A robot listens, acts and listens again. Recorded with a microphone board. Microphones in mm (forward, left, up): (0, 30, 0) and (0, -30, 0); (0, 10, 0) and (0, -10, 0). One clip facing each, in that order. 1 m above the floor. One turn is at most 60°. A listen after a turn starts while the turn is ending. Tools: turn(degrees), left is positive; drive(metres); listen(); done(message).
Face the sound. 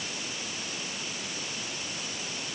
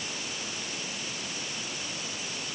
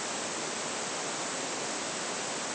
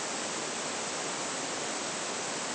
listen()
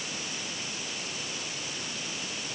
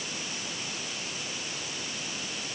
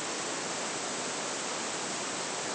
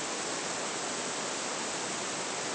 listen()
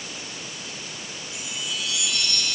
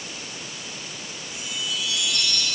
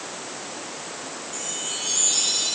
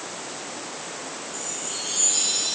turn(degrees=60)
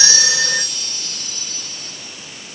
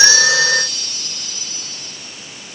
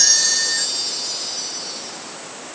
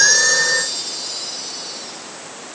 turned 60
turn(degrees=45)
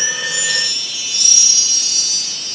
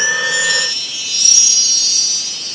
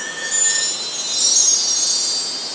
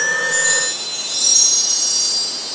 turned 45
turn(degrees=15)
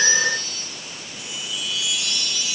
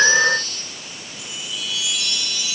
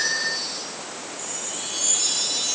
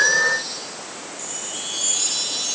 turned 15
done("Found it: a chime, straight ahead, over 4 m away.")